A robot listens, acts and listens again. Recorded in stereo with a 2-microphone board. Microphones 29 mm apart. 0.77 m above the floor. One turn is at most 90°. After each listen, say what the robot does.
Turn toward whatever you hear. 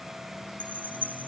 Turn 90° right.
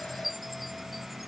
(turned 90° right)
Found it: a chime, straight ahead.